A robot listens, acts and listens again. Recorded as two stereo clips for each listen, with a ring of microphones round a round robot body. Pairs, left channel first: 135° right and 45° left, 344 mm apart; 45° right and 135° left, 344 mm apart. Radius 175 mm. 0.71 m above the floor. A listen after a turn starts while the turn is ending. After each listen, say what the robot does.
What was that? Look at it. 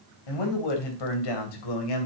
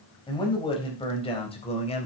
Turn 120° right.
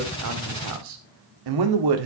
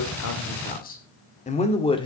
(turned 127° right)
Turn 30° left.
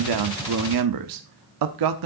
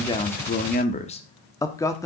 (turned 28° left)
Turn 35° left.
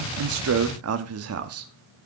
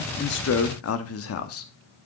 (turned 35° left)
Facing the man speaking.